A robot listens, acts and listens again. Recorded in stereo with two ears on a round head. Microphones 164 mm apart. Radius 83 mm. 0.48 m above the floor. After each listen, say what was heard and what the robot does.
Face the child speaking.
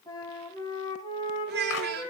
The child speaking: about 60° right or 120° right. Turn 60° right.
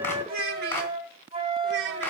So it is at 65° right. Turn 65° right.
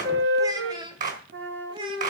The child speaking is now 25° right. Turn 25° right.
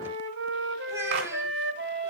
Keep listening.
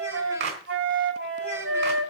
Keep listening.
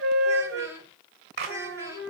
The child speaking is now 15° right. Turn 15° right.
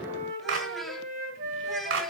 Keep listening.
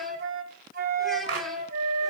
Keep listening.
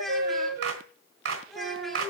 Found it: a child speaking, straight ahead, 2 to 4 m away.